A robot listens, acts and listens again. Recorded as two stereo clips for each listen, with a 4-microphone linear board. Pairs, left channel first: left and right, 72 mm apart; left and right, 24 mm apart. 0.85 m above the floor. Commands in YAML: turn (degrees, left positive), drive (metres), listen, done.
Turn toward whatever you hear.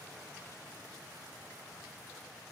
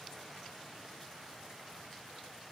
listen: true
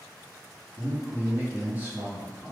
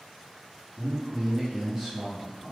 turn: -15
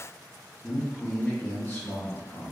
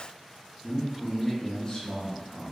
turn: 30
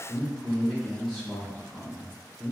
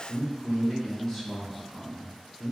done: "Found it: a man speaking, straight ahead, 1 to 2 m away."